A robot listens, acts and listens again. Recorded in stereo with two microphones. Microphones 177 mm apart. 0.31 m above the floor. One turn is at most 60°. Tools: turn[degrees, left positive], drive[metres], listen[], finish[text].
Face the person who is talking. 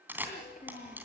Thought: The child speaking: about 45° left or 135° left.
Action: turn[45]
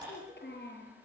Thought: So it is at 80° left.
Action: turn[60]
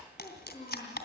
Thought: The child speaking is now 40° left.
Action: turn[40]
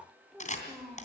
Action: finish[Found it: a child speaking, straight ahead, over 4 m away.]